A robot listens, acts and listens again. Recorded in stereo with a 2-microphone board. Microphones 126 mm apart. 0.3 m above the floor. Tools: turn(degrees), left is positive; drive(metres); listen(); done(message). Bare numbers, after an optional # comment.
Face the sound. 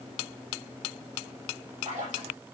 turn(-90)
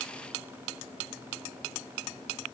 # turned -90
done("Facing where the splash came from. I can't hear it now.")